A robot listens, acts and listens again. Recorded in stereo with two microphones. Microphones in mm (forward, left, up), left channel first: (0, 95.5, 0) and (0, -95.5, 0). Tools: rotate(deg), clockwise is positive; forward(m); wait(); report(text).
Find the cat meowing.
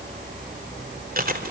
wait()
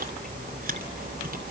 wait()
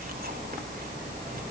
report("I can't make out a cat meowing to turn to.")